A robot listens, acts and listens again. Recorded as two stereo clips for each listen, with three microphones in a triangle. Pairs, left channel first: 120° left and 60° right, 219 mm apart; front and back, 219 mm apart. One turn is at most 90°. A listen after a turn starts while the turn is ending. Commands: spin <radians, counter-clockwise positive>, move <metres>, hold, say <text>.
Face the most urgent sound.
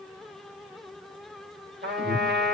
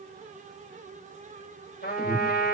spin -1.57
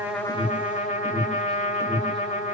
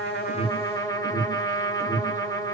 spin 0.35
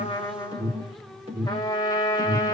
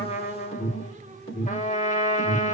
say Facing the alarm, 2 to 4 m away.